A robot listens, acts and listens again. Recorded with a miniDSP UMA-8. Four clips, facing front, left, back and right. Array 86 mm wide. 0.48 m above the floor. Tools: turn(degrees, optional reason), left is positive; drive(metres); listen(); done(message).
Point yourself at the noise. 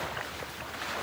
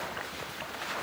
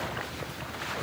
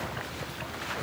listen()
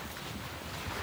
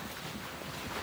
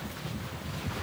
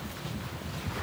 listen()
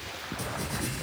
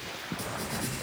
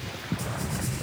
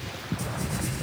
turn(degrees=20, reason="The writing: 20° left.")
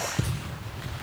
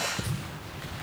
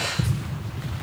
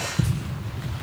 done("Facing the writing.")